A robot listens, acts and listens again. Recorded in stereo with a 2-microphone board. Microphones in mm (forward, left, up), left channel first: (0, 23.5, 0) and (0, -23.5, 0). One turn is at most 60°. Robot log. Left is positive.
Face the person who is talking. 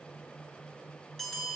cmd idle
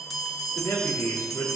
cmd yaw +60
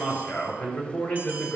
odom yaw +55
note: So it is at 35° left.
cmd yaw +35
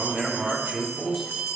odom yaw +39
end: Facing the man speaking.